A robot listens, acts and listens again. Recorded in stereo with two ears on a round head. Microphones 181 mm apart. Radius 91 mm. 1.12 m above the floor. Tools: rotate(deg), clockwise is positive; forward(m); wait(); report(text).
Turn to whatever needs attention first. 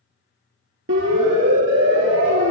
rotate(65)
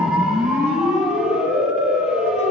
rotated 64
report("Facing the siren.")